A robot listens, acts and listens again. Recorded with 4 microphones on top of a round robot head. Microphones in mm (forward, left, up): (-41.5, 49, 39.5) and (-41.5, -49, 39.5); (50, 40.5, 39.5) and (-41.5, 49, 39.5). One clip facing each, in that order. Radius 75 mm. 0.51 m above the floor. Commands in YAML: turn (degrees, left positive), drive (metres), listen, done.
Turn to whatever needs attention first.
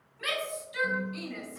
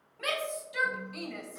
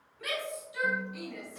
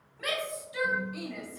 turn: -140
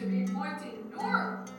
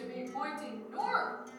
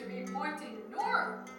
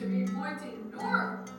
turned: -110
turn: -35
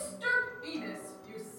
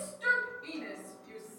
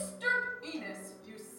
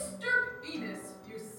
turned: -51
turn: 20
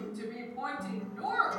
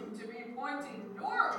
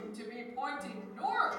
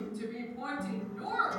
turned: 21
done: "Found it: a shout, straight ahead, 2 to 4 m away."